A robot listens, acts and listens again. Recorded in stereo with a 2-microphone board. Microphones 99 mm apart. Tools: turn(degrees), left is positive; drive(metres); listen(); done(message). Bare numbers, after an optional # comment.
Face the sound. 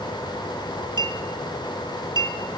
# The clink: about 45° right or 135° right.
turn(-45)
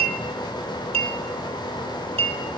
# So it is at 90° right.
turn(-90)
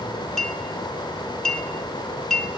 done("Facing the clink.")